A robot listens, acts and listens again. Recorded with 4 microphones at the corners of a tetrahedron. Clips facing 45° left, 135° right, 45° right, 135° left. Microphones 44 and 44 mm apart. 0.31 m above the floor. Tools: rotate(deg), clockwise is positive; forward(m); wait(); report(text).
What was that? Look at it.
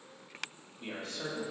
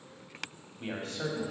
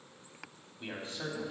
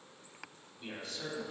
rotate(105)
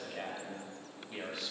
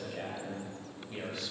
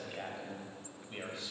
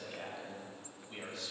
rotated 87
rotate(40)
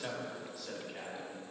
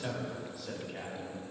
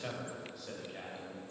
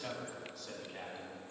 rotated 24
rotate(110)
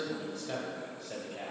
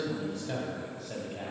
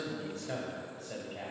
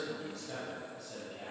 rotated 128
rotate(20)
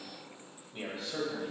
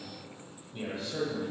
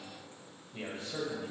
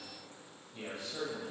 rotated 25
report("Found it: a man speaking, straight ahead.")